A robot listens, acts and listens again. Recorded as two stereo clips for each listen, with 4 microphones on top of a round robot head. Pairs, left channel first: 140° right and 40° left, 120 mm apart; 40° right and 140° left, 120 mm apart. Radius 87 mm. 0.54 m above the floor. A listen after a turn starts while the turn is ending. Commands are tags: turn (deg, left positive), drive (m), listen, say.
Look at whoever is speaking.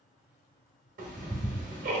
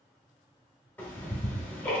<listen/>
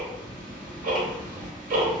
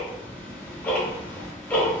<listen/>
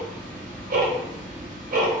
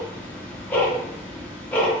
<say>I can't make out anyone speaking, only ticking.</say>